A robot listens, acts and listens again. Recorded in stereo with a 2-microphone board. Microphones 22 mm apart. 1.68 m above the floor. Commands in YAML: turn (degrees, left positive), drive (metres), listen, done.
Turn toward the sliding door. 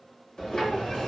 turn: 45
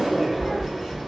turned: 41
turn: 10
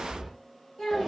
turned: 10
done: "Found it: a sliding door, straight ahead."